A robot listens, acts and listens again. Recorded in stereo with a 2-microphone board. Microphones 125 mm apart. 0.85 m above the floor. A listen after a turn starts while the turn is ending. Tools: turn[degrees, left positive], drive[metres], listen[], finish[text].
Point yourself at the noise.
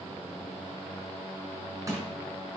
Thought: The crushing: about 25° right or 155° right.
Action: turn[-25]
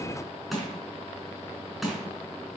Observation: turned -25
Action: finish[Facing the crushing, over 4 m away.]